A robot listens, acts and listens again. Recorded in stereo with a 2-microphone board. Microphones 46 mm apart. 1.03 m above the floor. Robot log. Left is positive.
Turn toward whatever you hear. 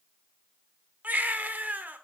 note: The baby crying: about 40° right or 140° right.
cmd yaw -40
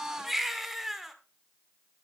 end: Facing the baby crying.